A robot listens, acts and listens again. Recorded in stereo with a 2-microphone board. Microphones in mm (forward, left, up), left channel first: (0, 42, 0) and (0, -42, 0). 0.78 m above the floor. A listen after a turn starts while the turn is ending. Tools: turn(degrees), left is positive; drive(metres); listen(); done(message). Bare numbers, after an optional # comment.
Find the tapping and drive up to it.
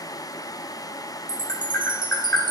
# The tapping: about 25° left or 155° left.
turn(25)
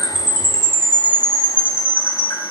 listen()
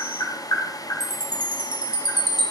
# So it is at 130° left.
turn(130)
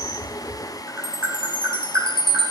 # The tapping is now 25° right.
turn(-25)
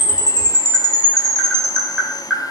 drive(1.0)
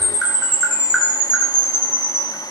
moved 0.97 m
# The tapping is now 10° right.
turn(-10)
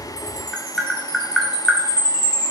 drive(1.0)
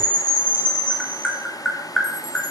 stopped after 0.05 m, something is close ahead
done("Arrived at the tapping, straight ahead.")